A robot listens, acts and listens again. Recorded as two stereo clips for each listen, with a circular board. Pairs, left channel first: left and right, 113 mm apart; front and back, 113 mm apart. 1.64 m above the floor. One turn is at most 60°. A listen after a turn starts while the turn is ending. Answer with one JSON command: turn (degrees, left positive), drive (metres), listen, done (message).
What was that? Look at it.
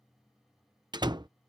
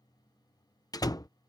{"turn": -50}
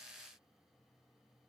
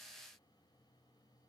{"done": "Facing where the door slam came from. I can't hear it now."}